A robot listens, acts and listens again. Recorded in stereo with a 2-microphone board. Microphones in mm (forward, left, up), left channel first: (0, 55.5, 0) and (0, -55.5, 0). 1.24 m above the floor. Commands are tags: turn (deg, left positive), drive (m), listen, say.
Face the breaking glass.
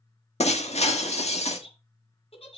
<turn deg="75"/>
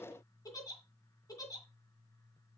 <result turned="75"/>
<listen/>
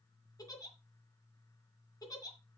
<say>I heard breaking glass, but can't make it out now. It was about straight ahead or 30° left.</say>